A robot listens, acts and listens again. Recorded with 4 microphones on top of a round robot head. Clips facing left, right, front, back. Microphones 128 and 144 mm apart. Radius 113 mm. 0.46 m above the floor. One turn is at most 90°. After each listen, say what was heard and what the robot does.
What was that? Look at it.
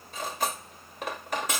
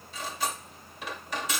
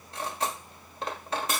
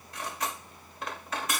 The cutlery clinking: 60° left. Turn 60° left.
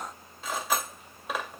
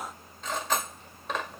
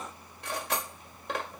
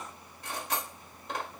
The cutlery clinking is now 10° left. Turn 10° left.
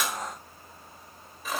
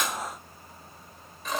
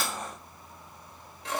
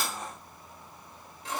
Found it: cutlery clinking, straight ahead.